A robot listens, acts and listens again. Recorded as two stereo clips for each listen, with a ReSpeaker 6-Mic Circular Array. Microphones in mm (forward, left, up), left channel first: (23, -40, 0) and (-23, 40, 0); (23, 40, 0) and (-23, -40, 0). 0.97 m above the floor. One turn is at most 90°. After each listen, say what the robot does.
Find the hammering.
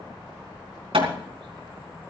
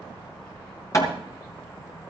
Turn 90° left.
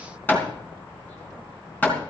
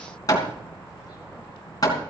Turn 10° left.
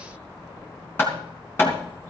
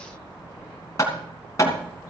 Found it: hammering, straight ahead.